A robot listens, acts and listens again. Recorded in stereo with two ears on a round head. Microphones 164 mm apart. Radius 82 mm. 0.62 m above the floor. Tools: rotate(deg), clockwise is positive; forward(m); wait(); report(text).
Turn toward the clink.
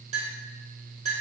rotate(35)
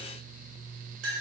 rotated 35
rotate(105)
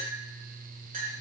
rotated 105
rotate(50)
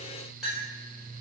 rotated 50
report("Found it: a clink, straight ahead, 1 to 2 m away.")